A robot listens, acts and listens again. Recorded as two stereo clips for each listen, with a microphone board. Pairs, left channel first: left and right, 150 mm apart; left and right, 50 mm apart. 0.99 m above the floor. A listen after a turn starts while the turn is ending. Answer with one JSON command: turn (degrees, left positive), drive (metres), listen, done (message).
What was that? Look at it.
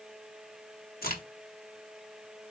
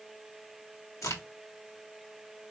{"turn": 90}
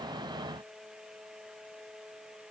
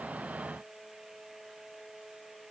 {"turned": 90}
{"done": "I heard a crack from this way, but can't make it out now."}